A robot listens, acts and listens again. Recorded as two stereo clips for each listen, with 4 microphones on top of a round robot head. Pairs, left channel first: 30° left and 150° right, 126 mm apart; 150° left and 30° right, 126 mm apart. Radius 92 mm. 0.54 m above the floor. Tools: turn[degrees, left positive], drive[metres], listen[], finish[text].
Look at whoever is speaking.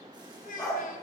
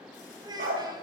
Thought: The child speaking: 25° left.
Action: turn[25]
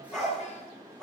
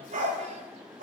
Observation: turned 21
Action: listen[]
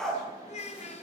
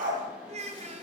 Action: finish[Facing the child speaking, 2 to 4 m away.]